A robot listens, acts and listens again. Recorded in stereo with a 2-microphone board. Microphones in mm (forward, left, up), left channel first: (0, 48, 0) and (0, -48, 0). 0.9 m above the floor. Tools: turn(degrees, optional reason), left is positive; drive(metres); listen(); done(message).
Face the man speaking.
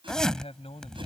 turn(degrees=90)
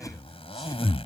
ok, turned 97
listen()
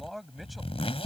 done("Found it: a man speaking, straight ahead.")